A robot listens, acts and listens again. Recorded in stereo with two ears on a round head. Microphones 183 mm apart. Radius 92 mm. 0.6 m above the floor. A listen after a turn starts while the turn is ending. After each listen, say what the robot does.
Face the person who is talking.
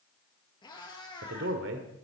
Turn 65° right.
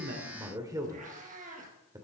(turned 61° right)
Turn 20° right.
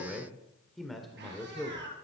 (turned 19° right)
Found it: a man speaking, straight ahead.